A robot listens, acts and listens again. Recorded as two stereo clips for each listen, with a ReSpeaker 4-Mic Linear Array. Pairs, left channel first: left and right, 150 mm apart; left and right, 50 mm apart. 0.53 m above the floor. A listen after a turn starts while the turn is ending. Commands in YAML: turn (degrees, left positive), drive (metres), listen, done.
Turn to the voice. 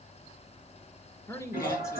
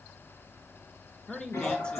turn: 20
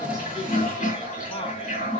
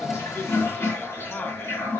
listen: true
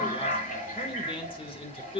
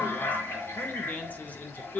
turn: 135
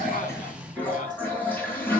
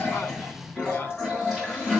listen: true
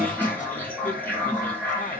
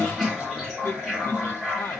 listen: true
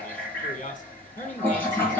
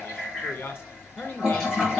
turn: 80
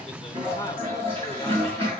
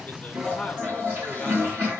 listen: true
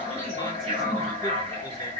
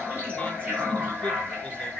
listen: true
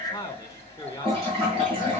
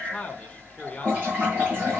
turn: 30
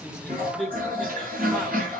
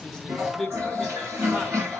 done: "Facing the man speaking, 1 to 2 m away."